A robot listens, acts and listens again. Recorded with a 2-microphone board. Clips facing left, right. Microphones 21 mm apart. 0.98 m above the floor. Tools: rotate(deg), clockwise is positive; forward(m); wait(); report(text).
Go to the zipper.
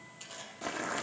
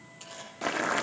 rotate(-30)
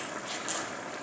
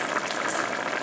wait()
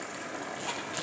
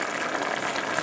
wait()
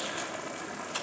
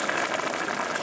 report("I heard a zipper, but can't make it out now. It was about 30° right or 150° left. I did not reach it.")